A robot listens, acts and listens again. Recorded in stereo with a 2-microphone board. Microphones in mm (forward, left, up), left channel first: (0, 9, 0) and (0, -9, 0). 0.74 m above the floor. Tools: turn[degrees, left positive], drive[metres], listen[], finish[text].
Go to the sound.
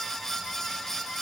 Action: listen[]
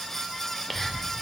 Thought: The whispering: about 15° left or 165° left.
Action: turn[15]
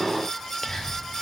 Thought: So it is at 150° left.
Action: turn[150]
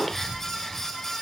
Action: listen[]
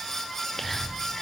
Action: drive[1.0]
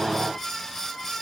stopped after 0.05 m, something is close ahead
Action: listen[]
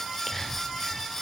Action: finish[Blocked. The whispering is further on, straight ahead.]